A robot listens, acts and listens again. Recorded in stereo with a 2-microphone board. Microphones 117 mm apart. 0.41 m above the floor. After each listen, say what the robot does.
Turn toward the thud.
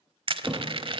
Turn 30° right.
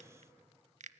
Keep listening.
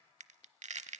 I heard a thud, but can't make it out now. It was about 25° left or 145° right.